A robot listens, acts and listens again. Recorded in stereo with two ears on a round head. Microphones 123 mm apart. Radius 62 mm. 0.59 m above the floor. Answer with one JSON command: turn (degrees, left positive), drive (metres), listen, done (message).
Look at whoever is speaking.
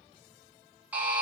{"listen": true}
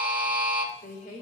{"turn": 55}
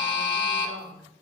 {"done": "Found it: a woman speaking, straight ahead, 2 to 4 m away."}